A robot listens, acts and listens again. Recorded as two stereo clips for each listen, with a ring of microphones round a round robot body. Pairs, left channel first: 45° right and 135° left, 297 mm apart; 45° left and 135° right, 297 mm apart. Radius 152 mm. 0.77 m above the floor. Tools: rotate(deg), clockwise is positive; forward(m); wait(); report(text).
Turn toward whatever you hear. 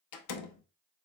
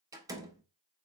rotate(55)
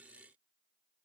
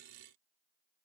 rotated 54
report("Facing where the door slam came from. I can't hear it now.")